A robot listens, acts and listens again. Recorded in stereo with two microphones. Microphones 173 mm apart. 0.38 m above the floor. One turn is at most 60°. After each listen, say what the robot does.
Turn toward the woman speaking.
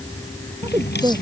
Turn 20° right.
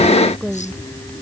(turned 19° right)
Turn 30° right.
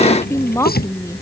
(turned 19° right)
Turn 15° left.
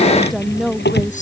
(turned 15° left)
Found it: a woman speaking, straight ahead.